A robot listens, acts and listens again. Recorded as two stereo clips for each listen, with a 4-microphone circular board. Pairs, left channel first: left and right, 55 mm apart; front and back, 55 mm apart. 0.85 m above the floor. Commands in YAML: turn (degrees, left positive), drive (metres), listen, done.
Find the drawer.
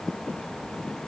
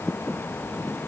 listen: true
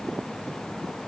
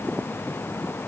listen: true
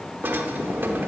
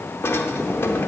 turn: -40
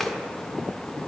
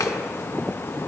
turn: 10
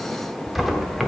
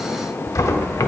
done: "Found it: a drawer, straight ahead."